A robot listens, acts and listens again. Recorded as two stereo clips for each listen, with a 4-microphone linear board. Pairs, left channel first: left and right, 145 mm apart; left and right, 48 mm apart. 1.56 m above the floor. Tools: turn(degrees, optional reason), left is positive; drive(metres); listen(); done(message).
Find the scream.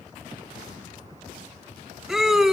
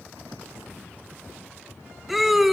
turn(degrees=-30)
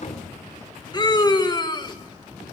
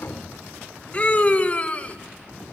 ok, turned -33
turn(degrees=30, reason="So it is at 30° left.")
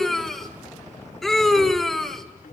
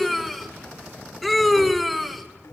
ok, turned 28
done("Found it: a scream, straight ahead, 2 to 4 m away.")